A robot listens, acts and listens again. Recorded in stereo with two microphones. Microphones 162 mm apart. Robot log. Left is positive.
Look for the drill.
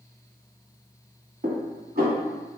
cmd idle
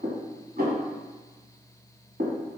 cmd idle
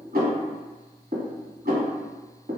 end: I can't make out a drill to turn to.